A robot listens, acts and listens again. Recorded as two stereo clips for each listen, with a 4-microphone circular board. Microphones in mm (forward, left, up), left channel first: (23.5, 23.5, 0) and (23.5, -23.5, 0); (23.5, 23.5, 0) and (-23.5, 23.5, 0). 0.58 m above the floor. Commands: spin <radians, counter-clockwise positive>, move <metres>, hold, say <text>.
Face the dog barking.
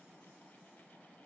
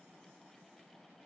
hold
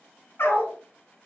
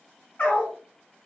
spin 0.96
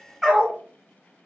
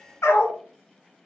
say Found it: a dog barking, straight ahead.